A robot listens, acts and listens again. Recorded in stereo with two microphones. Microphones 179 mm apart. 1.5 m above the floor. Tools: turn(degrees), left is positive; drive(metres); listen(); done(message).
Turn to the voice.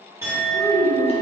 turn(degrees=75)
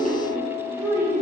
turn(degrees=-20)
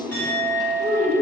turn(degrees=-25)
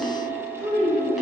turn(degrees=-20)
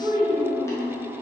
turn(degrees=-10)
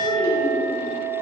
done("Facing the child speaking.")